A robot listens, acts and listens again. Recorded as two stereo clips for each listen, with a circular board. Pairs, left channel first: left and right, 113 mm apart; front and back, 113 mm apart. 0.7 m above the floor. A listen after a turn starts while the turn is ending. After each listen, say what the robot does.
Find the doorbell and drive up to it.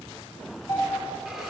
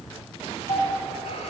Turn 40° left.
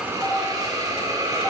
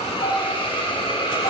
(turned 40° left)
Keep listening.
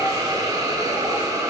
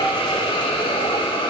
Keep listening.
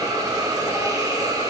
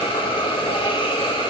Facing where the doorbell came from. I can't hear it now. I did not reach it.